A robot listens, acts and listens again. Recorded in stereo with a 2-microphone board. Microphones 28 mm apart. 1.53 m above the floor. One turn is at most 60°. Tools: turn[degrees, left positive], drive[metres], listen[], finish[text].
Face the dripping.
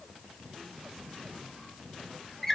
Action: listen[]
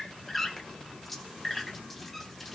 Action: listen[]
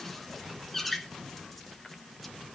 Action: finish[I can't make out dripping to turn to.]